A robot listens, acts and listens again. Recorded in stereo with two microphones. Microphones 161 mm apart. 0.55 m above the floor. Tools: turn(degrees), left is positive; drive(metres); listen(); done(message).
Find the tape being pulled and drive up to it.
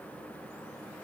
listen()
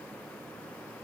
listen()
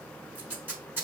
turn(degrees=-30)
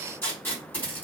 turn(degrees=15)
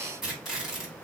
drive(metres=1.0)
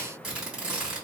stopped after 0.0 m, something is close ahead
done("Something is in my way. I am facing the tape being pulled but have not reached it.")